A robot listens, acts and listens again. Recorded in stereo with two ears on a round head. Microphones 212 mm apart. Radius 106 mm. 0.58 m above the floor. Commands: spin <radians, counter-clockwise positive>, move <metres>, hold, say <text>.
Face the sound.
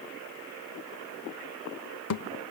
spin 1.22
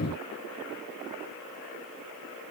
hold
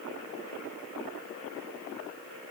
say I heard a thud, but can't make it out now. It was about straight ahead or 40° left.